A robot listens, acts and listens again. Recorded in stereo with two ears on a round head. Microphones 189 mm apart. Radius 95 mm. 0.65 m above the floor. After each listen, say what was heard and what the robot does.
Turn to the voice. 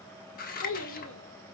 The child speaking: about 70° left or 110° left. Turn 70° left.
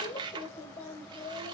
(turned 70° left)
So it is at 30° left. Turn 30° left.
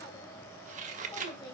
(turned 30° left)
The child speaking is now 20° left. Turn 20° left.
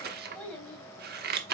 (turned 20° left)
Found it: a child speaking, straight ahead.